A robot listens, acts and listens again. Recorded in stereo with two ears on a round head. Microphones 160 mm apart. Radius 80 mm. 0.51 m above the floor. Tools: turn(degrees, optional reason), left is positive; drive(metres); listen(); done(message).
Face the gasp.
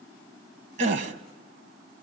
turn(degrees=-45, reason="The gasp: about 45° right or 135° right.")
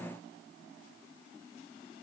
listen()
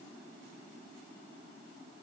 done("I heard a gasp, but can't make it out now. It was about straight ahead or 90° right.")